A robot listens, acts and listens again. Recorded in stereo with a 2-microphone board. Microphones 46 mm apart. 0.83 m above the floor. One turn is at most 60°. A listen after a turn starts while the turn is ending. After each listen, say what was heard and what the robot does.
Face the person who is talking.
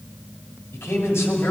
The man speaking: about 70° left or 110° left. Turn 60° left.
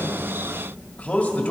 So it is at 35° left. Turn 35° left.
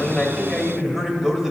The man speaking is now 10° right. Turn 10° right.
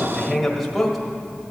Facing the man speaking, 1 to 2 m away.